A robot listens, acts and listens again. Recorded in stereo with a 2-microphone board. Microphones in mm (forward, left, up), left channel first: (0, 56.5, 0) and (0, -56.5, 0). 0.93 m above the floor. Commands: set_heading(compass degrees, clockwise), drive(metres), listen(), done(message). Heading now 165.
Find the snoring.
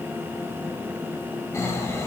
set_heading(140)
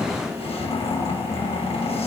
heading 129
set_heading(9)
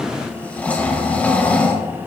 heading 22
set_heading(7)
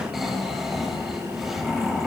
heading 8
done("Found it: snoring, straight ahead, 2 to 4 m away.")